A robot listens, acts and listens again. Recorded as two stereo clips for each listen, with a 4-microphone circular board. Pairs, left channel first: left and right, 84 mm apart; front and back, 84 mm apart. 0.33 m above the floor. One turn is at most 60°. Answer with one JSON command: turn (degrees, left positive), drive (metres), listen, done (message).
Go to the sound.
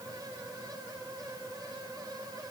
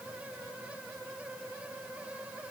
{"listen": true}
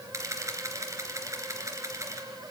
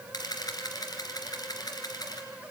{"turn": -40}
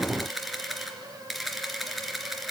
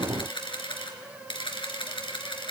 {"drive": 1.0}
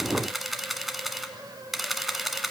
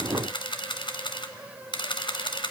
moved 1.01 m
{"drive": 1.0}
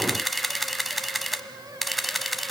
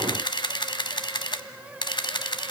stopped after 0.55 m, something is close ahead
{"done": "Arrived at the camera shutter, straight ahead."}